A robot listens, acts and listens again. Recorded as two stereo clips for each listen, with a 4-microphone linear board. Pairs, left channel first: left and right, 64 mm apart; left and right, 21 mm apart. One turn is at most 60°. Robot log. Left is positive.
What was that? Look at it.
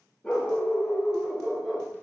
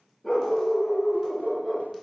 cmd yaw +30
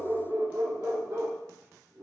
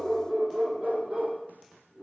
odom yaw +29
note: So it is at 70° right.
cmd yaw -60
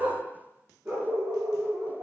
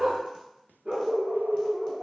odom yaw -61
note: The dog barking is now 40° right.
cmd yaw -40
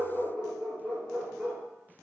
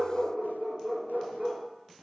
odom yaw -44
end: Found it: a dog barking, straight ahead.